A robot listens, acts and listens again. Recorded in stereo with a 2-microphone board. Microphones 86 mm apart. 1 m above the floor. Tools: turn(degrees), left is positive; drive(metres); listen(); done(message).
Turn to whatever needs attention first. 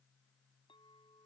listen()
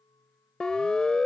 turn(degrees=30)
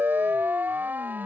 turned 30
turn(degrees=-20)
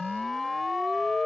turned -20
done("Found it: a siren, straight ahead.")